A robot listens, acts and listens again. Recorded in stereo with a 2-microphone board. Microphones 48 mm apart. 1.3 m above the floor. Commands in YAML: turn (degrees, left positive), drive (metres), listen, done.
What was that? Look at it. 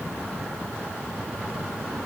listen: true
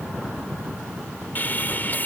turn: 40
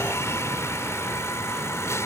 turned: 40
turn: 100
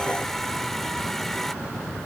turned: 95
done: "Found it: sawing, straight ahead."